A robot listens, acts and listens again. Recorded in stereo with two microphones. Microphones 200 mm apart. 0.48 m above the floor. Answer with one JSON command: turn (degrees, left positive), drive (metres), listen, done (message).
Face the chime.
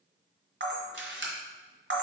{"listen": true}
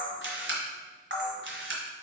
{"listen": true}
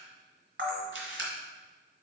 {"done": "I can't make out a chime to turn to."}